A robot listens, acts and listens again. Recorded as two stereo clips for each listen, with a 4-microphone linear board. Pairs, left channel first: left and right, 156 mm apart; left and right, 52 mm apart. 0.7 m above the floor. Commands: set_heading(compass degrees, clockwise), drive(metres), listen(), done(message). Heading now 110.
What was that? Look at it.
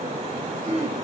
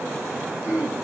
set_heading(145)
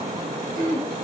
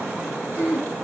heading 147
set_heading(252)
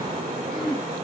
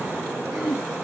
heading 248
done("Found it: throat clearing, straight ahead, 1 to 2 m away.")